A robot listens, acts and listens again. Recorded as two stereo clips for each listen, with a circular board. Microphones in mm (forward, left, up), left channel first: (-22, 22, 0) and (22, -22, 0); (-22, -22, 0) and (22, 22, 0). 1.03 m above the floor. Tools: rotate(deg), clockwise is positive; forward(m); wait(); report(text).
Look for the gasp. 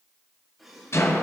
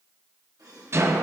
rotate(-40)
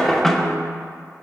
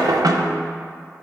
report("I heard a gasp from this way, but can't make it out now.")